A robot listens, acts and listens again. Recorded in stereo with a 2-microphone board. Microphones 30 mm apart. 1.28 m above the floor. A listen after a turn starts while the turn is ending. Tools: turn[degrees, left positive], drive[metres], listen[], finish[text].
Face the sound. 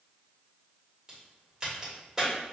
Thought: The crack: about 20° right or 160° right.
Action: turn[-20]
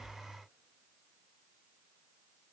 Action: listen[]
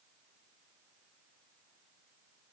Action: finish[I heard a crack, but can't make it out now. It was about straight ahead or 140° right.]